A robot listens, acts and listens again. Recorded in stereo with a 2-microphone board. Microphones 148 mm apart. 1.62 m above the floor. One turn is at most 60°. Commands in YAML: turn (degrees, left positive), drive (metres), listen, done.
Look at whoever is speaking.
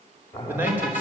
turn: -30
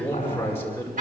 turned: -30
turn: 15
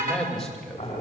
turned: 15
done: "Found it: a man speaking, straight ahead."